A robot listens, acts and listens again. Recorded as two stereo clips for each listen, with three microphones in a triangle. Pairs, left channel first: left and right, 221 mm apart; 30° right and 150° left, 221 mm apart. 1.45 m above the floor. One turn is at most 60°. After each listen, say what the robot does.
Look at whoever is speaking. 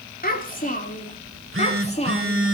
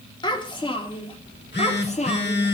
Turn 30° left.
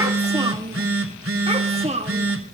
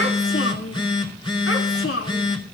Turn 30° right.
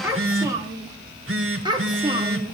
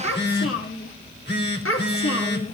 Turn 20° right.
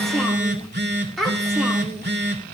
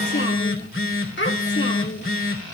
Facing the child speaking, 2 to 4 m away.